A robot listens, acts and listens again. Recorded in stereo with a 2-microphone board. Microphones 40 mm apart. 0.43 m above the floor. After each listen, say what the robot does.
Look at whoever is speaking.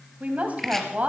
Turn 40° right.
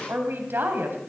Turn 95° right.
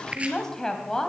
Turn 20° left.
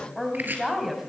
Facing the woman speaking.